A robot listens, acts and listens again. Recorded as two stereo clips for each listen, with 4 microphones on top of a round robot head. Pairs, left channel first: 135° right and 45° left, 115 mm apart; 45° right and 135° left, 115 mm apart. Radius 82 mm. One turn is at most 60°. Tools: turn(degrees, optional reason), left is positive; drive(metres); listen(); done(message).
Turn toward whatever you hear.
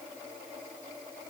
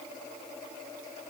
listen()
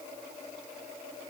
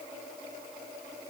listen()
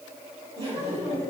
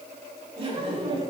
turn(degrees=60, reason="The laughter: 85° left.")
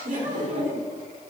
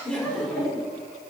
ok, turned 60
turn(degrees=35, reason="The laughter is now 35° left.")
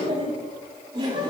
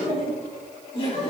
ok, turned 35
done("Found it: laughter, straight ahead, over 4 m away.")